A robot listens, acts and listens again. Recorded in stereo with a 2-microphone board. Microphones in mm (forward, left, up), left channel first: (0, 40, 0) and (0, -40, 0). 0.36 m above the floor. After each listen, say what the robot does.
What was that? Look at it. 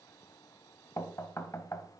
Turn 35° left.
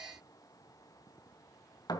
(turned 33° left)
Turn 100° left.
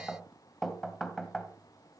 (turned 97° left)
Facing the knocking, 2 to 4 m away.